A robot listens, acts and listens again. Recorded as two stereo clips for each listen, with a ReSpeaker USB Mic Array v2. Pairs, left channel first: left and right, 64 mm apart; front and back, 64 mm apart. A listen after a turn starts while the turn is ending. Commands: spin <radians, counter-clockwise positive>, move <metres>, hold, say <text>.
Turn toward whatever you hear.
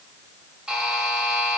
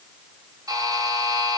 spin -2.88
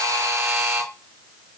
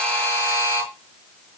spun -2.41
spin -0.52
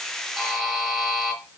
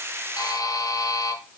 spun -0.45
say Facing the buzzer.